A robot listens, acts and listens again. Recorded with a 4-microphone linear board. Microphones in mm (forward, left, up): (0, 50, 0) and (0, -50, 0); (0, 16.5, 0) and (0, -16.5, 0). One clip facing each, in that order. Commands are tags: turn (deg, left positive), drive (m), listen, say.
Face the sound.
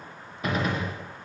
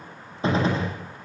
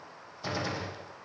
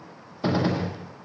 <turn deg="-30"/>
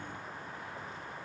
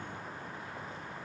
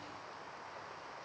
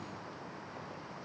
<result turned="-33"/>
<listen/>
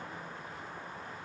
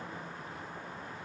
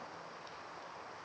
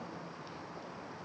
<say>I heard a gunshot, but can't make it out now. It was about 5° left or 115° right.</say>